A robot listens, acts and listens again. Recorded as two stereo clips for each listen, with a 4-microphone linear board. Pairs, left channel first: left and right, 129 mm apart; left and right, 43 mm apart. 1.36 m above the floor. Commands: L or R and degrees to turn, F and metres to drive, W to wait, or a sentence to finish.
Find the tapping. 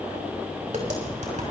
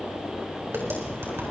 R90
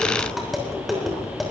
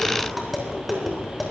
Facing the tapping, over 4 m away.